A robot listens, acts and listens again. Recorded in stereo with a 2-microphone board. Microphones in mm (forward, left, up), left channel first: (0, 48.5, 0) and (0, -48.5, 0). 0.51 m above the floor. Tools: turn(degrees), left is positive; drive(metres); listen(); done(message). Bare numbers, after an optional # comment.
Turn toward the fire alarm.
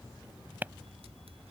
listen()
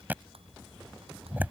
listen()
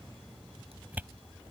done("I can't make out a fire alarm to turn to.")